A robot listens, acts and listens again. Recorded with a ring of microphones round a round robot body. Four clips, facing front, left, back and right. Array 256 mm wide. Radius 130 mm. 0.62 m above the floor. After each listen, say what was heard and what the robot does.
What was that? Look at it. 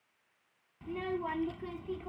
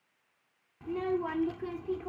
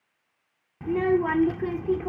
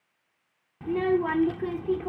The child speaking: 150° right. Turn 150° right.
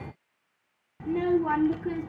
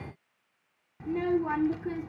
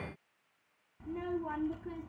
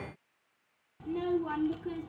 The child speaking is now 10° left. Turn 10° left.
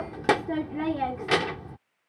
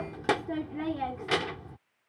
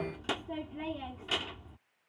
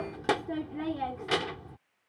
Facing the child speaking.